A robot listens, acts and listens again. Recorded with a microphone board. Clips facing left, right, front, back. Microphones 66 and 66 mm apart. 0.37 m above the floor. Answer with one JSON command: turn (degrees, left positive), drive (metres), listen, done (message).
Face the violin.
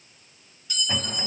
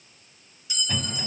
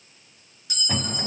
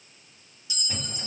{"listen": true}
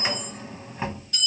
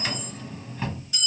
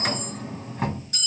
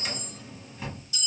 {"listen": true}
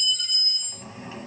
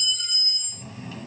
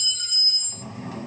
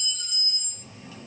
{"done": "I can't make out a violin, only a drawer and a clink."}